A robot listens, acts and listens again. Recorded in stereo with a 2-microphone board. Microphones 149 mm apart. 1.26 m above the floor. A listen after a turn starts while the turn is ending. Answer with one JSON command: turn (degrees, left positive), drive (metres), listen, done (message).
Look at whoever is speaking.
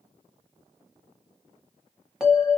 {"listen": true}
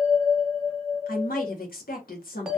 {"turn": 70}
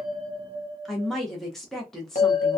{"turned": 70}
{"done": "Facing the woman speaking."}